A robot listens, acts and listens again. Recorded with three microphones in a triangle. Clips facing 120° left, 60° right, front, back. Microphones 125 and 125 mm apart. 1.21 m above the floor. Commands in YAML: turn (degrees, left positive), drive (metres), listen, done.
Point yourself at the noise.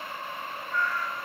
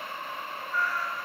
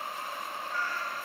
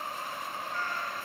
turn: -150
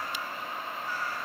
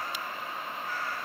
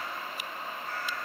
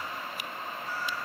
turn: -30
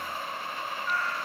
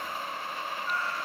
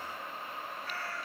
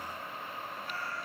done: "Facing the cat meowing."